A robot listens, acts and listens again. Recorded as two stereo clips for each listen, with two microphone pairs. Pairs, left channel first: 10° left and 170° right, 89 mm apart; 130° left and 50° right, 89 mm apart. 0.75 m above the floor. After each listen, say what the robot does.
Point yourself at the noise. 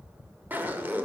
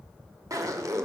Turn 100° right.
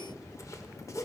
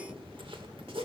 Turn 40° right.
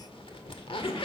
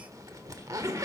Facing the zipper.